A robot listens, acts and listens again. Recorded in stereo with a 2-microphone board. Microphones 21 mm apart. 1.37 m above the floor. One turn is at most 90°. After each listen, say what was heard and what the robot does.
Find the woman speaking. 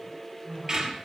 Turn 90° right.
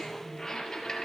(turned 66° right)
Nothing new. It was at 25° right. Turn 25° right.
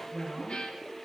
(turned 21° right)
The woman speaking is now 10° left. Turn 10° left.
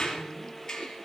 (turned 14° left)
Keep listening.
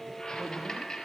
Keep listening.
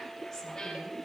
I heard a woman speaking from this way, but can't make it out now.